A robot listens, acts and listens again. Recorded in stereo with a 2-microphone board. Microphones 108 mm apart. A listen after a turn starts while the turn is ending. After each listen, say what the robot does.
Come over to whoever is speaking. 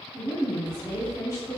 Turn 25° right.
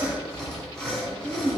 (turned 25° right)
Turn 125° right.
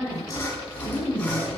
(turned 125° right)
Turn 30° left.
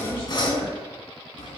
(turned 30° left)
Keep listening.
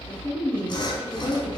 Drive 1.0 m forward.
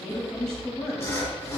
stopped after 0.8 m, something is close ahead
Turn 10° left.
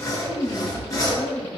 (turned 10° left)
Arrived at the woman speaking, straight ahead.